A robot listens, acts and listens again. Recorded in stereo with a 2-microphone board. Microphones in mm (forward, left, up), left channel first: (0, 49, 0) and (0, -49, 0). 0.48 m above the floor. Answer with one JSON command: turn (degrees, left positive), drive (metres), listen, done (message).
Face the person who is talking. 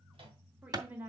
{"turn": -20}
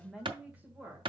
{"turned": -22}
{"turn": -20}
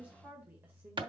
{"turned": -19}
{"turn": -30}
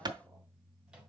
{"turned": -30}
{"listen": true}
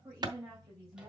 {"turn": -25}
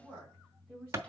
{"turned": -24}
{"turn": -30}
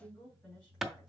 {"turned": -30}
{"turn": 20}
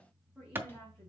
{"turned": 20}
{"done": "Found it: a woman speaking, straight ahead."}